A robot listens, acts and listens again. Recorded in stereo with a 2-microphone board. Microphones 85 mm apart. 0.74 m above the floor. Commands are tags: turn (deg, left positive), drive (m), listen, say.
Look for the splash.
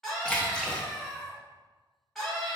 <turn deg="30"/>
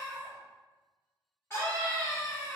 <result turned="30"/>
<listen/>
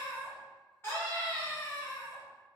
<say>I heard a splash, but can't make it out now. It was about 20° right or 140° left.</say>